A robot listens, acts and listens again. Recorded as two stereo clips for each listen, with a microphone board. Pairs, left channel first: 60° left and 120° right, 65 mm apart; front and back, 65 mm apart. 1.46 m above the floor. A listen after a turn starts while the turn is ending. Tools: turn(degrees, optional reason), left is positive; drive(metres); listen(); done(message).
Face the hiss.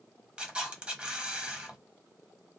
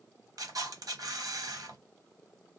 listen()
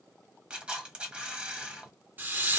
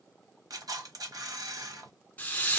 turn(degrees=-65, reason="The hiss: 65° right.")
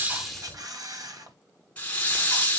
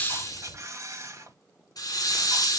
done("Facing the hiss.")